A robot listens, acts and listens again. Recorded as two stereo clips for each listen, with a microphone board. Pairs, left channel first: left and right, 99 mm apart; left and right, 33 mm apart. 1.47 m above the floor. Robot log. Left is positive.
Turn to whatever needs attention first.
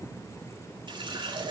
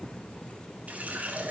cmd idle
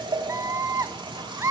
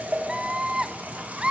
note: The scream: about 30° right or 150° right.
cmd yaw -30
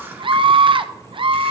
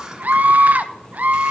note: So it is at 120° right.
cmd yaw -120
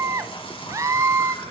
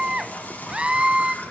note: The scream is now 30° right.
cmd yaw -30
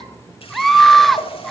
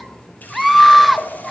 end: Facing the scream.